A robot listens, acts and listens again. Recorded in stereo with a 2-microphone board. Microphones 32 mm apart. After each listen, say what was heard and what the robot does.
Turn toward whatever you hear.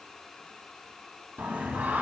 Turn 90° right.
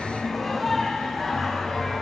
So it is at 10° left. Turn 10° left.
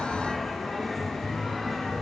Found it: singing, straight ahead.